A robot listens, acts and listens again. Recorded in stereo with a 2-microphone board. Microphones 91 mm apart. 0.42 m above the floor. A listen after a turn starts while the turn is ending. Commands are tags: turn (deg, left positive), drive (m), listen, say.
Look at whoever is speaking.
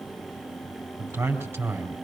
<turn deg="-30"/>
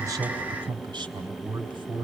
<turn deg="-120"/>
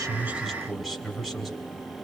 <say>Facing the man speaking.</say>